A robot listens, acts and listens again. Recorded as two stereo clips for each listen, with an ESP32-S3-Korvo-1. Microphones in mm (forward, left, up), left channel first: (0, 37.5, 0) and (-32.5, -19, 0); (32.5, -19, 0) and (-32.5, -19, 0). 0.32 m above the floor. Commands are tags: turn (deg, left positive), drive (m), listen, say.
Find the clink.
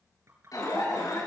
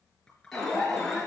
<turn deg="-75"/>
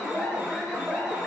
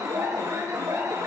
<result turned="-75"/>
<listen/>
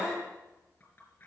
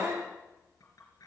<say>Facing the clink, over 4 m away.</say>